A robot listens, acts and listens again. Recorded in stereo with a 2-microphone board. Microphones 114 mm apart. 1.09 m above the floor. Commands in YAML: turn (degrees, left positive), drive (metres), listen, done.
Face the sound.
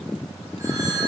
turn: -30
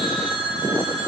turn: -120
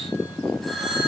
done: "Facing the phone ringing, over 4 m away."